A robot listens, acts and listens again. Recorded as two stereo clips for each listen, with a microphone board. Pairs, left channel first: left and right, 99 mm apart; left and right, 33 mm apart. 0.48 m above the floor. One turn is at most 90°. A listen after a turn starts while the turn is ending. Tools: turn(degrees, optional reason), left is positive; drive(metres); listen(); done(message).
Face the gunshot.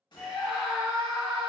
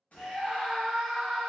turn(degrees=50, reason="The gunshot: about 50° left or 130° left.")
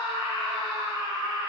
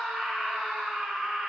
listen()
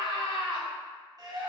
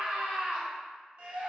done("I heard a gunshot, but can't make it out now. It was about straight ahead or 80° left.")